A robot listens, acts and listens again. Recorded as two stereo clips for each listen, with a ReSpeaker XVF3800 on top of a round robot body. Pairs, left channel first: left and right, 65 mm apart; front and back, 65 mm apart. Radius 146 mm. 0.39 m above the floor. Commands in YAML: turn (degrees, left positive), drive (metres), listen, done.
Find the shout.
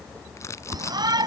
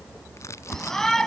turn: -85
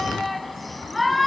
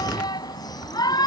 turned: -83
done: "Facing the shout."